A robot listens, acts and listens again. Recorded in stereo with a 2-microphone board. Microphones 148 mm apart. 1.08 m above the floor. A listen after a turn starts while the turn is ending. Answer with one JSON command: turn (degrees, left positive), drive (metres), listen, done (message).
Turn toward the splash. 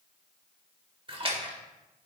{"turn": -35}
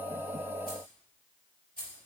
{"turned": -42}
{"listen": true}
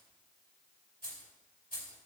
{"done": "I heard a splash, but can't make it out now. It was about 5° left or 100° right."}